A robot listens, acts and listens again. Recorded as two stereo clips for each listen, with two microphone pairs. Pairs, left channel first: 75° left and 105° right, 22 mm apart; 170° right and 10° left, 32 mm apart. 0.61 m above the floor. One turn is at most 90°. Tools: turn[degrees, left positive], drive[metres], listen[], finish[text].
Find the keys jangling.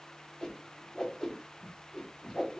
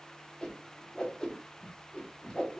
Action: listen[]
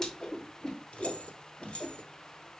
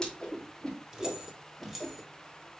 Thought: The keys jangling: 90° left.
Action: turn[90]
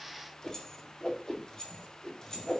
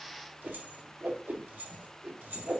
Thought: The keys jangling is now 10° left.
Action: turn[10]
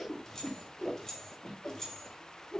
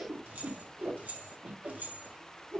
Action: finish[Facing the keys jangling, 2 to 4 m away.]